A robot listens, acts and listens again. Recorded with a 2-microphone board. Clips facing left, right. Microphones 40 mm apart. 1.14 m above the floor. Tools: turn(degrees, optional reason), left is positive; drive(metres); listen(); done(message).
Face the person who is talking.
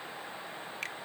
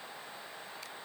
listen()
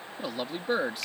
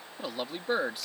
turn(degrees=30)
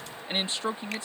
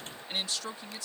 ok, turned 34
turn(degrees=145, reason="So it is at 145° left.")
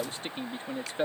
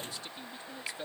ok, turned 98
turn(degrees=45, reason="The man speaking is now 45° left.")
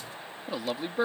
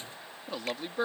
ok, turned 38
done("Facing the man speaking.")